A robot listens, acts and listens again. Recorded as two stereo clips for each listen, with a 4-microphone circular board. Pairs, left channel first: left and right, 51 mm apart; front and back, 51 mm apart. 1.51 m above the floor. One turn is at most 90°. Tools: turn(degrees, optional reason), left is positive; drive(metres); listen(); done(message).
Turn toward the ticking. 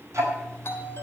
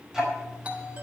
turn(degrees=-90, reason="The ticking: 105° right.")
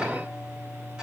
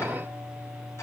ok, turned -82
turn(degrees=-20, reason="The ticking is now 20° right.")
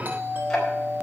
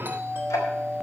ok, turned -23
done("Found it: ticking, straight ahead, over 4 m away.")